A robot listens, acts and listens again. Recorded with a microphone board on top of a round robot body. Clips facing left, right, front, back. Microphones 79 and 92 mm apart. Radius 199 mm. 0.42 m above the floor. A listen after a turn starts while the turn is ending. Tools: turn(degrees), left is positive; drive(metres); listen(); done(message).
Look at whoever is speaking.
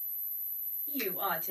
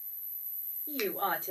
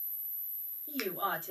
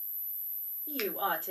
turn(degrees=-150)
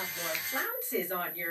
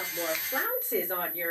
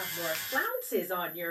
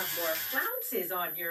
turn(degrees=-50)
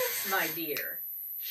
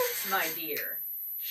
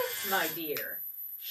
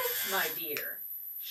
turn(degrees=10)
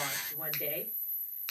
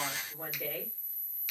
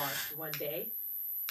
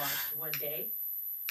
listen()
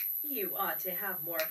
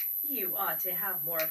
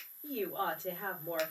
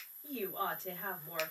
done("Found it: a woman speaking, straight ahead, 2 to 4 m away.")